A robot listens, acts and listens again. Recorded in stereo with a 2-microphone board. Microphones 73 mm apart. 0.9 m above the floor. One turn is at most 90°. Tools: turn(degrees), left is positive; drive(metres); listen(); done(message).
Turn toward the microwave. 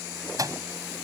turn(degrees=-50)
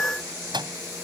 turn(degrees=-80)
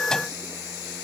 listen()
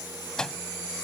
turn(degrees=10)
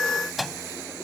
done("Found it: a microwave, straight ahead.")